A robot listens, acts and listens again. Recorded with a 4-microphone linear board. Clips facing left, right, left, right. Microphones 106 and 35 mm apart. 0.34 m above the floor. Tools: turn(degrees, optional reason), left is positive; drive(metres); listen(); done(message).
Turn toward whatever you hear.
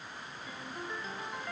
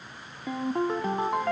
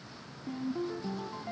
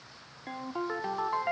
turn(degrees=-70, reason="The ringtone: about 70° right or 110° right.")
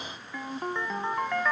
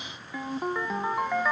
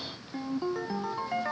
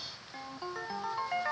turn(degrees=-10, reason="So it is at 10° right.")
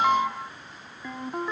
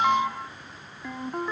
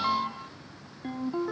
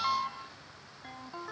done("Facing the ringtone.")